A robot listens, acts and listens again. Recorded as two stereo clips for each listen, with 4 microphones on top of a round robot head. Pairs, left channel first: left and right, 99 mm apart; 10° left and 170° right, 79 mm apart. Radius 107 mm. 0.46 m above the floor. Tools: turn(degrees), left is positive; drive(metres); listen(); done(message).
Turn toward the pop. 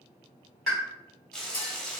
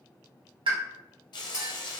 turn(degrees=180)
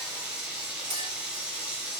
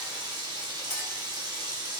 done("I heard a pop from this way, but can't make it out now.")